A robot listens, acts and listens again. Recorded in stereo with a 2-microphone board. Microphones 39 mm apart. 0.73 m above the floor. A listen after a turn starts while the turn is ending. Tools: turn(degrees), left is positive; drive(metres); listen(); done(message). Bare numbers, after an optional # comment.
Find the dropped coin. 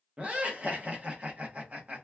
listen()
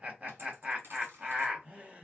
# The dropped coin: about 75° right or 105° right.
turn(-75)
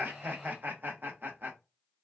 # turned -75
listen()
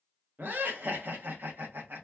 done("I heard a dropped coin, but can't make it out now. It was about straight ahead or 30° right.")